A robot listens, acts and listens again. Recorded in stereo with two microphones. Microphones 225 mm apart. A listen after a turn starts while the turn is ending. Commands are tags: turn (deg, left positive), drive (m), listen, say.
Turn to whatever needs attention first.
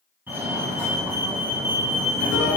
<turn deg="-30"/>
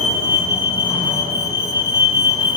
<turn deg="20"/>
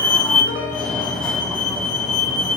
<say>Found it: a fire alarm, straight ahead.</say>